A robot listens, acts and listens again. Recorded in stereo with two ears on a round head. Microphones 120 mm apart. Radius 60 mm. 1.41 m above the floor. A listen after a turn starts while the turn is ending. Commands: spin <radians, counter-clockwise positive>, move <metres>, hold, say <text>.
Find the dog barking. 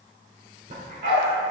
spin -1.05
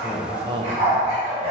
spin -0.79
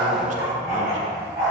spin -0.35
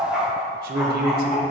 say Facing the dog barking, over 4 m away.